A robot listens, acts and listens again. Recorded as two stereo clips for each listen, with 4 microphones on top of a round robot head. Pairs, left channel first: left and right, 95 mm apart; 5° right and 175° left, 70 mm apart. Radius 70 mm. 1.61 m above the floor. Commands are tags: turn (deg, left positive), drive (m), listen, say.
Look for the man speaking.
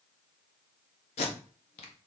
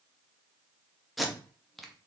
<listen/>
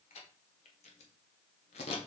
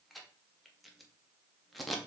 <listen/>
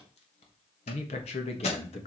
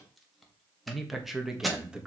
<turn deg="100"/>
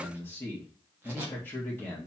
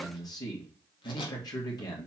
<turn deg="15"/>
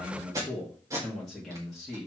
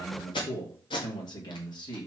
<say>Found it: a man speaking, straight ahead.</say>